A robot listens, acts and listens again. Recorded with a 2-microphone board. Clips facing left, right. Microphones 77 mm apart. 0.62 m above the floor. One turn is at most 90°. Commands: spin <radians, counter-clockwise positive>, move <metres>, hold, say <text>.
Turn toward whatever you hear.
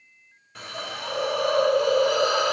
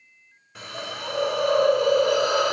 spin -0.52
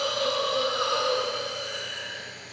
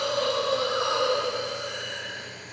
spin -1.57
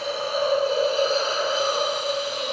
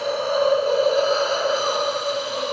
spin -0.79
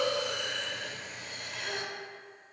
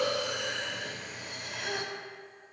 say Facing the hiss, 1 to 2 m away.